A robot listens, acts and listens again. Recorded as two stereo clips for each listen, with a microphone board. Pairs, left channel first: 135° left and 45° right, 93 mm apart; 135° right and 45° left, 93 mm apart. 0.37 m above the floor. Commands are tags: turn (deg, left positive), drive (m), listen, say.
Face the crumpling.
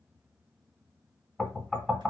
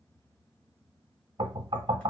<listen/>
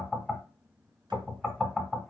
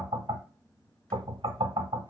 <listen/>
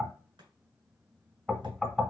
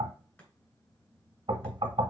<say>I can't make out crumpling to turn to.</say>